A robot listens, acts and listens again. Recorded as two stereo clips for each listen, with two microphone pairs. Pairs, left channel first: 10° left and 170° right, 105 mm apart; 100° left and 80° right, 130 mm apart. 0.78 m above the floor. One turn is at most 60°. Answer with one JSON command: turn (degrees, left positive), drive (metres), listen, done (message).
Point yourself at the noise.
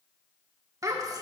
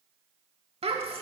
{"turn": -60}
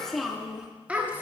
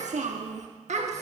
{"turn": -60}
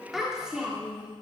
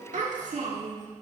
{"turn": -60}
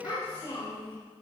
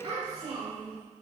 {"turn": -35}
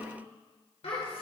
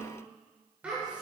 {"done": "Facing the child speaking."}